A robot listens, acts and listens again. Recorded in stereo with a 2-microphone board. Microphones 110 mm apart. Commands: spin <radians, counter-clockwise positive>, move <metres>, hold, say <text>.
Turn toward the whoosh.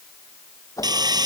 spin 0.52
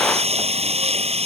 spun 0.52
hold
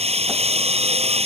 hold
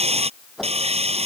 say Facing the whoosh.